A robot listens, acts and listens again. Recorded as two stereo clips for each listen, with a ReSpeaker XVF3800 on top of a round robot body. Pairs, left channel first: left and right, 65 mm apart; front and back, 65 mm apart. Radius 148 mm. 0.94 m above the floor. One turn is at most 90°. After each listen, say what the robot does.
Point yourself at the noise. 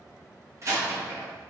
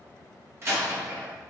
Turn 90° right.
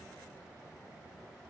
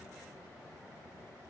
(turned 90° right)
Turn 45° right.
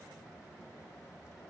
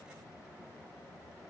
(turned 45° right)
I heard a door slam from this way, but can't make it out now.